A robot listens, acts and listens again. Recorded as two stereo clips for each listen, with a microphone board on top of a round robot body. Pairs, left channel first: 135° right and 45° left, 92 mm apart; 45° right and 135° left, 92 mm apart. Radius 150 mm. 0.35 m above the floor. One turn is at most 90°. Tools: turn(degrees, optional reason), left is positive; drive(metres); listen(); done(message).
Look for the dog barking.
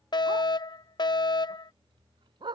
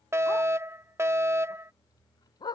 done("Found it: a dog barking, straight ahead.")